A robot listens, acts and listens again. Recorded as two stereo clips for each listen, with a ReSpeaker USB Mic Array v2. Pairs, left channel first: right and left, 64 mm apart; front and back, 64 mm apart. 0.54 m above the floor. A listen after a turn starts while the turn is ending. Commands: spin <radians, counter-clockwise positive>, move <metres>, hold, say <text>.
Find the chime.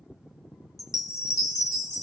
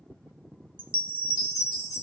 spin -1.92
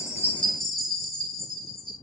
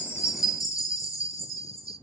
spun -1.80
say Facing the chime, under 1 m away.